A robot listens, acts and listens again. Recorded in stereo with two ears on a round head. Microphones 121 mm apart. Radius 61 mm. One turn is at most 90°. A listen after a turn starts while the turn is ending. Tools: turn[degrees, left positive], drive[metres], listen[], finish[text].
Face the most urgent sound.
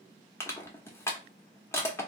Action: listen[]
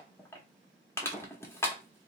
Action: listen[]
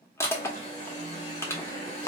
Thought: The alarm: about 55° left or 125° left.
Action: turn[55]
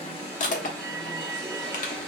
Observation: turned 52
Action: finish[Found it: an alarm, straight ahead.]